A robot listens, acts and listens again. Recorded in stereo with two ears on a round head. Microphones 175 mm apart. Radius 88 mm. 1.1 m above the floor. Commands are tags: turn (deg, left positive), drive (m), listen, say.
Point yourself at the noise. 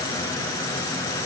<listen/>
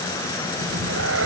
<turn deg="-90"/>
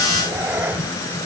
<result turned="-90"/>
<turn deg="-10"/>
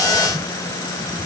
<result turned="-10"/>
<listen/>
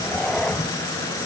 <say>Found it: a cat meowing, straight ahead.</say>